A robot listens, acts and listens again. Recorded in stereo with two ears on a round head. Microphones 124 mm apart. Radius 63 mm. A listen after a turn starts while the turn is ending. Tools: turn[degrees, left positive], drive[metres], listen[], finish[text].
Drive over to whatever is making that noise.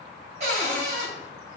Thought: The cupboard door: about 50° right or 130° right.
Action: turn[-50]
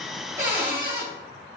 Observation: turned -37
Thought: So it is at 15° right.
Action: turn[-15]
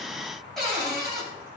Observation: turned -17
Action: drive[1.0]
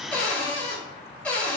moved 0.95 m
Thought: The cupboard door is now 10° left.
Action: turn[10]
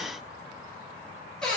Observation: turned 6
Action: drive[1.0]
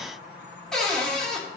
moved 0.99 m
Action: drive[1.0]
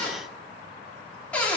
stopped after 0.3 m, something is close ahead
Thought: The cupboard door is now 10° left.
Action: turn[10]
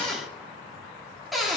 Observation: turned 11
Action: finish[I am next to the cupboard door.]